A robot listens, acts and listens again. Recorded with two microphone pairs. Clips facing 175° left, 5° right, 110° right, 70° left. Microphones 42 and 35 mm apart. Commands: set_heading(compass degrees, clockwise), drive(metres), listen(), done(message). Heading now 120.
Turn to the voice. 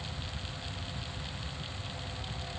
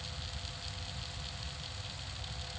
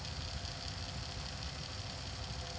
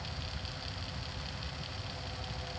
listen()
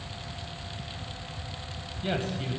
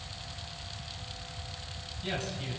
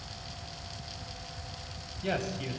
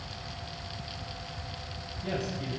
set_heading(245)
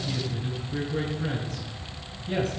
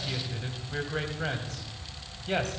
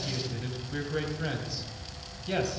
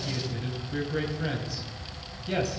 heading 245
set_heading(265)
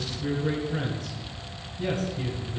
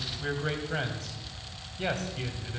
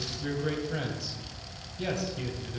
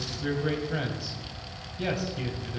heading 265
done("Found it: a man speaking, straight ahead.")